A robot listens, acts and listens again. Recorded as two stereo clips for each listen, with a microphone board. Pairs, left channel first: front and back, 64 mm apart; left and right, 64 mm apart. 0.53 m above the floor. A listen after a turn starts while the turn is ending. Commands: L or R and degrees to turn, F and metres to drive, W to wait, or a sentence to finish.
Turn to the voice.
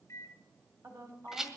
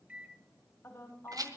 L140
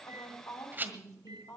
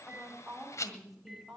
Found it: a woman speaking, straight ahead.